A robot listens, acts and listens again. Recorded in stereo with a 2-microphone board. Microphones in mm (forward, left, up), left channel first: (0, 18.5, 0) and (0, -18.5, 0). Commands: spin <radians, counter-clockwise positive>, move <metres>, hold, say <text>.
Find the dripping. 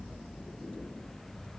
hold
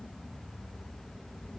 hold
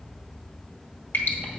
spin 1.57
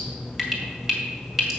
say Found it: dripping, straight ahead.